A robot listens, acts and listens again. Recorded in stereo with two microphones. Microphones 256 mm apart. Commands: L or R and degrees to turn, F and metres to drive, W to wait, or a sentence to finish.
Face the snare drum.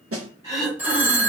R65
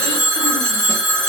W
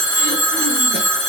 W
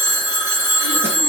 I heard a snare drum, but can't make it out now. It was about straight ahead or 50° right.